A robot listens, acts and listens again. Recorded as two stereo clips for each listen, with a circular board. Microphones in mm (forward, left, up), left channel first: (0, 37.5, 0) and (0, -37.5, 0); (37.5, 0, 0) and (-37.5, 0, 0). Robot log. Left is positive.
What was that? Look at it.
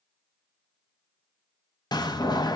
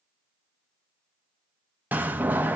note: The door slam: 115° left.
cmd yaw +115
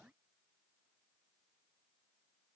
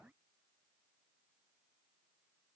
end: I heard a door slam from this way, but can't make it out now.